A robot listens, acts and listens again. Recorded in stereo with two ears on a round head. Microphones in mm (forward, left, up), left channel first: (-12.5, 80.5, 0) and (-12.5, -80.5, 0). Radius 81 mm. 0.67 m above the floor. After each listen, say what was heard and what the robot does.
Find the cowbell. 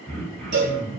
The cowbell: about 65° right or 115° right. Turn 65° right.
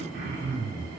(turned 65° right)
Keep listening.
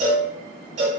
So it is at 40° right. Turn 40° right.
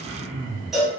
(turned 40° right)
Found it: a cowbell, straight ahead, under 1 m away.